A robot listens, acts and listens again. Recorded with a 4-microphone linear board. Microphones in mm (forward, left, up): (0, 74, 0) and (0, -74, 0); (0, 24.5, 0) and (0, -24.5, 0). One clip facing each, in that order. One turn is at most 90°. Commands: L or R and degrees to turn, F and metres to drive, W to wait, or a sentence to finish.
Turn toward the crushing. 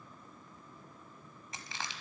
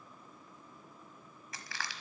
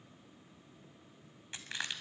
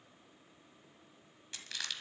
L25
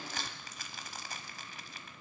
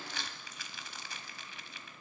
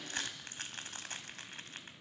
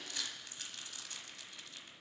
L90
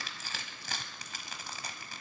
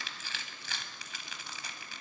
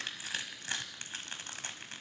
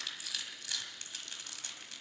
L50
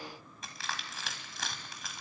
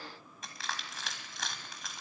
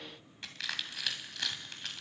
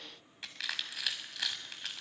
Facing the crushing, 1 to 2 m away.